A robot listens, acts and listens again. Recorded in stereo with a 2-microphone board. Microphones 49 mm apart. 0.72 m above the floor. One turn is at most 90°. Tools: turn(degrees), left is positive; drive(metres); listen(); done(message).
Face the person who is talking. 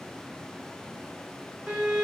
listen()
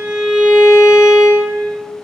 listen()
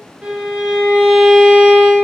done("I can't make out anyone speaking to turn to.")